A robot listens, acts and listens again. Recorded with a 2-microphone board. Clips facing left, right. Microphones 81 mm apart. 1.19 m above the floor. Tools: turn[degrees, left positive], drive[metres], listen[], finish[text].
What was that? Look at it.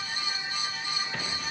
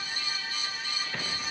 Action: listen[]
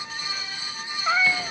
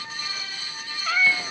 Thought: The cat meowing: about 20° left or 160° left.
Action: turn[20]
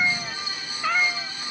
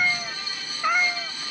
Thought: So it is at 15° right.
Action: turn[-15]
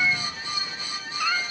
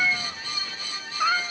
Thought: The cat meowing is now 25° right.
Action: turn[-25]
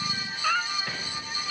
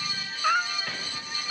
Thought: The cat meowing is now 15° right.
Action: turn[-15]
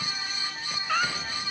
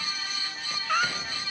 Action: finish[Facing the cat meowing.]